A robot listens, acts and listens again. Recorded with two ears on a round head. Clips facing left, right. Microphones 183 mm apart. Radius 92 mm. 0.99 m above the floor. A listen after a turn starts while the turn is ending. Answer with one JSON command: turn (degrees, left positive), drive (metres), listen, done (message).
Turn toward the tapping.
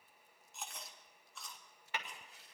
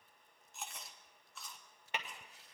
{"turn": -20}
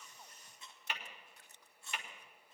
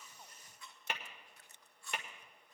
{"turn": -135}
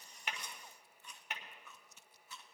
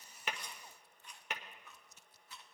{"turn": -65}
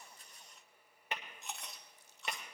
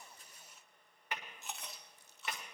{"turn": 25}
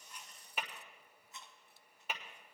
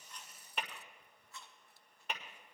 {"done": "Found it: tapping, straight ahead."}